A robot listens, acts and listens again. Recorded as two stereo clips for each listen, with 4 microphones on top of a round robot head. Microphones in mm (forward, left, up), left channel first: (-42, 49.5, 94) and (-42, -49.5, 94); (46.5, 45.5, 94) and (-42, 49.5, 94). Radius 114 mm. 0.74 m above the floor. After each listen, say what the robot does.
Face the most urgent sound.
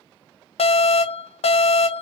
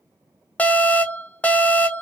Turn 70° left.
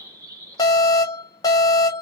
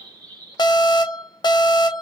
Turn 35° left.
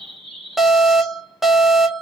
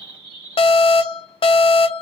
Facing the alarm.